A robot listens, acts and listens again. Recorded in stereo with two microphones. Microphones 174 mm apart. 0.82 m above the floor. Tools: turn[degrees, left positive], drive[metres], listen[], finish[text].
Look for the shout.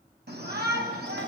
Action: turn[-90]
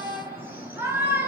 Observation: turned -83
Thought: So it is at 10° right.
Action: turn[-10]
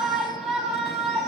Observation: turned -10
Action: finish[Found it: a shout, straight ahead, over 4 m away.]